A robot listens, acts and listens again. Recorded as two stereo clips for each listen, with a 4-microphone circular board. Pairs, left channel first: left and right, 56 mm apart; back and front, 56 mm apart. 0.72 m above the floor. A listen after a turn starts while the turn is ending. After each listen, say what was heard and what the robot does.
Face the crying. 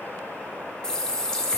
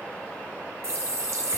Keep listening.
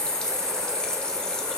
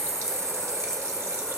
Keep listening.
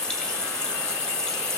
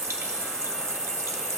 I can't make out crying, only a running tap.